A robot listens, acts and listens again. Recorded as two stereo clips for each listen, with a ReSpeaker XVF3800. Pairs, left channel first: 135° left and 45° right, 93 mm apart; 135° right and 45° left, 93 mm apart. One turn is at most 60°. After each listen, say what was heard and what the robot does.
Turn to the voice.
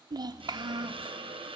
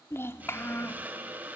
The child speaking: 75° right. Turn 60° right.
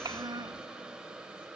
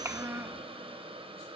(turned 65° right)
The child speaking is now 15° right. Turn 15° right.
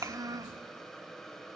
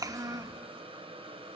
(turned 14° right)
Facing the child speaking, under 1 m away.